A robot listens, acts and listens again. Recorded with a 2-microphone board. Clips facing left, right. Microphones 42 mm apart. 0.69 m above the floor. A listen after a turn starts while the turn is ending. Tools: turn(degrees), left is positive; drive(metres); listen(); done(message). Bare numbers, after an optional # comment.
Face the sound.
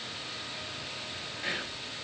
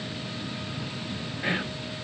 # The whispering: about 20° right or 160° right.
turn(-20)
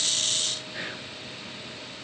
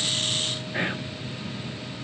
# So it is at 135° right.
turn(-135)
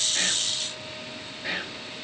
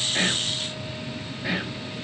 done("Found it: whispering, straight ahead, 1 to 2 m away.")